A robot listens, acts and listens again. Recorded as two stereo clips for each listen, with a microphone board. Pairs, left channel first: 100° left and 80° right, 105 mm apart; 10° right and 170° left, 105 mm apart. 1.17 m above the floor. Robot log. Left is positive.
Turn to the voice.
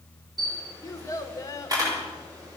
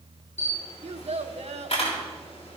note: The child speaking: 160° left.
cmd yaw +160
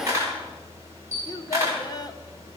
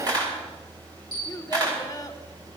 note: The child speaking is now 45° left.
cmd yaw +45
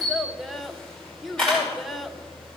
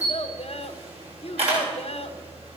note: The child speaking is now 10° left.
cmd yaw +10
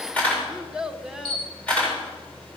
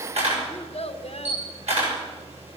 end: Facing the child speaking.